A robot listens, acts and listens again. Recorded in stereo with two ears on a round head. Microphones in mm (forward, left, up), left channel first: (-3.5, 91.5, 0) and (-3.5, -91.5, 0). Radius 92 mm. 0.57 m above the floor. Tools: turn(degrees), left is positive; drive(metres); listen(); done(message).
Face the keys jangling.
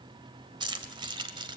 turn(degrees=-25)
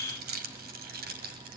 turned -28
turn(degrees=-130)
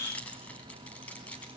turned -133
done("Facing the keys jangling.")